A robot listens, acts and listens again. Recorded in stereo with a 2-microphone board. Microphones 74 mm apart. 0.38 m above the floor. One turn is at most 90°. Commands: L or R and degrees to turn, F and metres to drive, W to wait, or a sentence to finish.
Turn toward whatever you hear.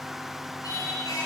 L60
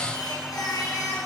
L60
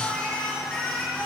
L10
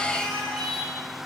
Facing the singing, 2 to 4 m away.